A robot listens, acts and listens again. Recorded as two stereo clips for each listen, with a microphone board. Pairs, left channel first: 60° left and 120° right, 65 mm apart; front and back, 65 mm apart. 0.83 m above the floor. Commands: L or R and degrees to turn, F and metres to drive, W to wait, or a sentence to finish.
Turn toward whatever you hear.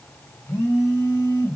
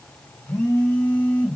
L45
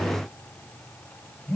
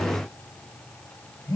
Found it: a phone buzzing, straight ahead.